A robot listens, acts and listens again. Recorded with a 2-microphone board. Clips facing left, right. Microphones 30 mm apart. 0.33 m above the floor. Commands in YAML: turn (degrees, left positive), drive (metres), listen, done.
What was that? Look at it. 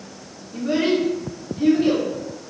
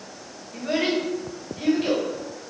turn: -50
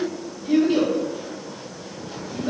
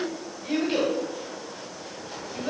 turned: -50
turn: -65
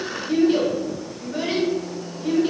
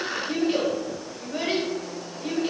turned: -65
turn: -25
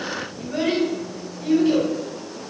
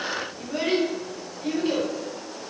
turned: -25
done: "Found it: a child speaking, straight ahead, 1 to 2 m away."